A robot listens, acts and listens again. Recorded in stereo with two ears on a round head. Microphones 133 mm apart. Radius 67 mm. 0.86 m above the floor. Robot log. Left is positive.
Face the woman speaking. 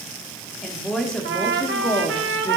cmd yaw +30
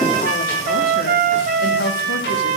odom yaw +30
note: So it is at 105° left.
cmd yaw +105
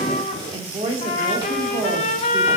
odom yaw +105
note: The woman speaking is now 35° right.
cmd yaw -35
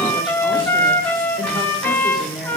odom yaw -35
end: Facing the woman speaking, 1 to 2 m away.